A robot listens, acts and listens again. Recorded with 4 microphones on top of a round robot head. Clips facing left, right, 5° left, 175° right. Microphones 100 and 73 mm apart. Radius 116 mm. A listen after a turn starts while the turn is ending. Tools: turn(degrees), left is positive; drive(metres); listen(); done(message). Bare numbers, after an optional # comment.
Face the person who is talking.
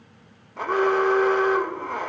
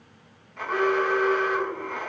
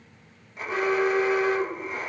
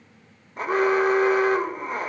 listen()
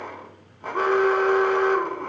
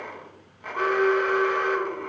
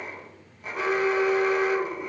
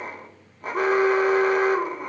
listen()
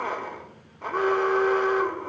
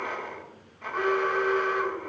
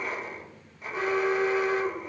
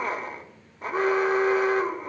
done("I can't make out anyone speaking, only an alarm.")